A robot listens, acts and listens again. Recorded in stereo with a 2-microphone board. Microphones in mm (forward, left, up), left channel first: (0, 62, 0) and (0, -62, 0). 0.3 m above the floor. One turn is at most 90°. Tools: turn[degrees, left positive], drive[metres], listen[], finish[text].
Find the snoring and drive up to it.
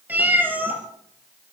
Action: listen[]
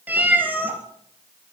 Action: listen[]
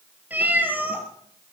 Action: finish[I can't make out snoring to turn to.]